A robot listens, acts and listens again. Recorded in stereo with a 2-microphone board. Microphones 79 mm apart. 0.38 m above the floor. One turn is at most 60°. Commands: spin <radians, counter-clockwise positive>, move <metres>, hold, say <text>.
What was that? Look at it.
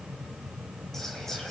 hold
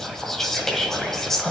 spin 0.52
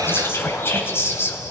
spin 1.05
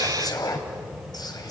spin 1.05
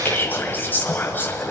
spin 0.52
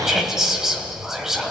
say Facing the whispering, 1 to 2 m away.